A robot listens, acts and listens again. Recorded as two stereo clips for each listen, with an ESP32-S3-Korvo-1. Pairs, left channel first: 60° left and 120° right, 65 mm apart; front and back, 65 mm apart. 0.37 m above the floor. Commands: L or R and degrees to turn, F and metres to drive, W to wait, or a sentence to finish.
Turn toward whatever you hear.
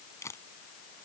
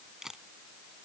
L95
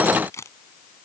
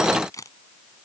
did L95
L20
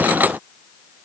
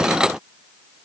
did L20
W
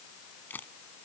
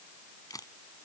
Facing the camera shutter.